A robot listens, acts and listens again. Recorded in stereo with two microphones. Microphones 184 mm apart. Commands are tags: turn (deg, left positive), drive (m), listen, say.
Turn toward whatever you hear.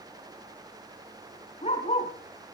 <turn deg="35"/>
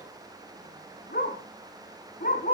<turn deg="130"/>
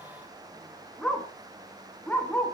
<turn deg="10"/>
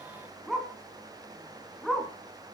<say>Found it: a dog barking, straight ahead, 2 to 4 m away.</say>